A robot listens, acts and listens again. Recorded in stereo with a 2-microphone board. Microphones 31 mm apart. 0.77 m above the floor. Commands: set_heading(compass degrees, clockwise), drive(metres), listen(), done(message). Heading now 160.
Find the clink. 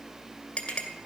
set_heading(130)
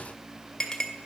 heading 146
set_heading(131)
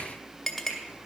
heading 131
done("Facing the clink, 2 to 4 m away.")